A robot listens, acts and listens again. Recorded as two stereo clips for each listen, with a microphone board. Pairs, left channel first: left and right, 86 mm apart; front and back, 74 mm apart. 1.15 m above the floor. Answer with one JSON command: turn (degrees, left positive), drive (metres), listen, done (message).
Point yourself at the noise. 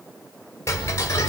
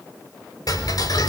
{"turn": 30}
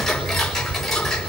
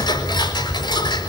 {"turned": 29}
{"done": "Found it: ticking, straight ahead, over 4 m away."}